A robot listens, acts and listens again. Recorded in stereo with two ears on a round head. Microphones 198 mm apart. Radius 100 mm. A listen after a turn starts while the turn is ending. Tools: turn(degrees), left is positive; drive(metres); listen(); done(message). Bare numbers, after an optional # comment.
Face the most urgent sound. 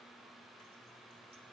listen()
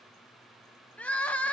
turn(30)
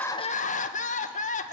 # So it is at 145° left.
turn(145)
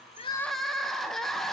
done("Found it: crying, straight ahead.")